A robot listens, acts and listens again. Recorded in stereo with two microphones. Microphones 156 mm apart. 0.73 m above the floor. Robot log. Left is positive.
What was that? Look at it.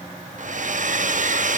note: The hair dryer: about 60° right or 120° right.
cmd yaw -60
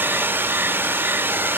note: So it is at 15° right.
cmd yaw -15
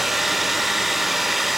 end: Found it: a hair dryer, straight ahead, under 1 m away.